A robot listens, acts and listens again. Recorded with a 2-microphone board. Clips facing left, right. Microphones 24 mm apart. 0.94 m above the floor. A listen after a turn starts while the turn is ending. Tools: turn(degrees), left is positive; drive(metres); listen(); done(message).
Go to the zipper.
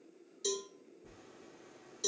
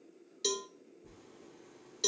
turn(degrees=30)
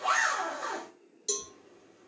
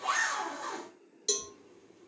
turn(degrees=135)
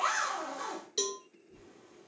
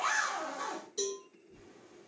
turn(degrees=30)
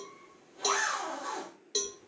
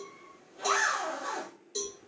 drive(metres=1.0)
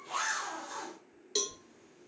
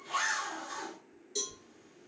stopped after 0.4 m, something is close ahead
turn(degrees=-10)
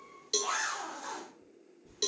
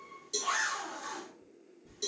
done("Something is in my way. I am facing the zipper but have not reached it.")